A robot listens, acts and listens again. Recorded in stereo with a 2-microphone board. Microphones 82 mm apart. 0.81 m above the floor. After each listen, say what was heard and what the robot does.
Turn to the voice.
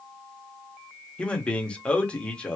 Turn 30° left.
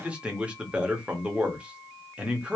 So it is at 15° right. Turn 15° right.
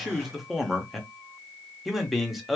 Found it: a man speaking, straight ahead, 1 to 2 m away.